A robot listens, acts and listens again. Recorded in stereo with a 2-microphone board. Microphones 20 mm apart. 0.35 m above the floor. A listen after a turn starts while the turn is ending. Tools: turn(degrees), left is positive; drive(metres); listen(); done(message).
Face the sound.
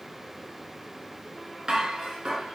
turn(degrees=-50)
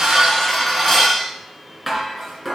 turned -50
done("Facing the dishes clattering.")